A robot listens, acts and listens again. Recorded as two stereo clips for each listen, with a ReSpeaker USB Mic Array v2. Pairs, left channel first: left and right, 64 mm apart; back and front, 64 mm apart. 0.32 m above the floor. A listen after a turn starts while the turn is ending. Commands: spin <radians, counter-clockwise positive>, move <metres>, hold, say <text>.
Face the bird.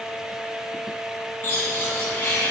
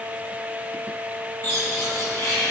spin 2.62
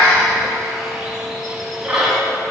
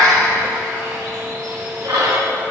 spin -0.17
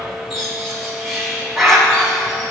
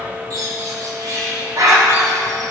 say Found it: a bird, straight ahead.